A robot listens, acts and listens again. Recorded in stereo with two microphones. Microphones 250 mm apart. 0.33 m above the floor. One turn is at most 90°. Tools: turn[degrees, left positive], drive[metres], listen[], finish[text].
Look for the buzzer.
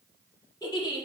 Action: listen[]
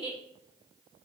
Action: listen[]
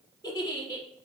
Action: finish[I can't make out a buzzer to turn to.]